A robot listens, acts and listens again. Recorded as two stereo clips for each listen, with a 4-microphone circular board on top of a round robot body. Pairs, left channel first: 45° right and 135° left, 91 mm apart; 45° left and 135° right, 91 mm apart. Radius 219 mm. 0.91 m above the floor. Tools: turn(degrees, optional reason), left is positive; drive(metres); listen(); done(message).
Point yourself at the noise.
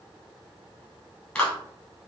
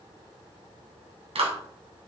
turn(degrees=-125, reason="The clap: 125° right.")
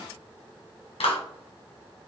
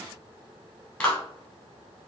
turn(degrees=-35, reason="The clap is now 35° right.")
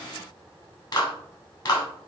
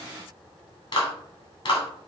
done("Found it: a clap, straight ahead.")